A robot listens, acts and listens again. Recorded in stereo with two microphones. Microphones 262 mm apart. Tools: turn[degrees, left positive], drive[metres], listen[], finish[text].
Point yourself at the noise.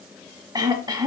Thought: The throat clearing: about 15° right or 165° right.
Action: turn[-15]
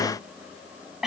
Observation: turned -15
Action: finish[Facing the throat clearing.]